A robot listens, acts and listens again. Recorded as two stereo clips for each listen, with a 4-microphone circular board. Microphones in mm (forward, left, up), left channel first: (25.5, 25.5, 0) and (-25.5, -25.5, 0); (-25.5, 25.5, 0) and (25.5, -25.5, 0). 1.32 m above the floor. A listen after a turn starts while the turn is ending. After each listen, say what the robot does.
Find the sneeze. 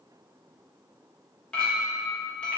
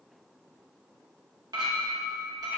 Keep listening.
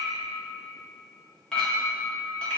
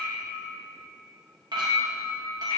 Keep listening.
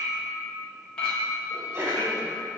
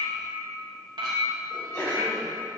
Turn 165° left.
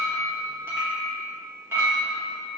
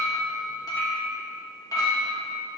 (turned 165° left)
Facing where the sneeze came from. I can't hear it now.